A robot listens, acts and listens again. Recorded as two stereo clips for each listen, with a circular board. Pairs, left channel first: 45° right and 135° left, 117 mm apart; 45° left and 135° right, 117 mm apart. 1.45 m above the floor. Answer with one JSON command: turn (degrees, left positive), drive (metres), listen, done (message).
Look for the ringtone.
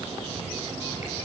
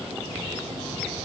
{"listen": true}
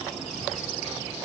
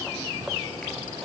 {"listen": true}
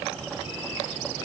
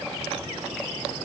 {"done": "I can't make out a ringtone to turn to."}